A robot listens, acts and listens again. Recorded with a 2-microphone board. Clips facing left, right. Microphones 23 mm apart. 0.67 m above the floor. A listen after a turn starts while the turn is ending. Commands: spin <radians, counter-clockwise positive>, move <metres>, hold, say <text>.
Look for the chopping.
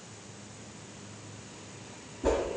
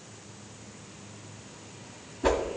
hold
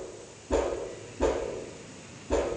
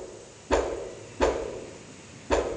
hold
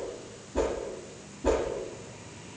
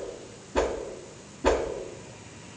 say I can't make out chopping, only a whoosh.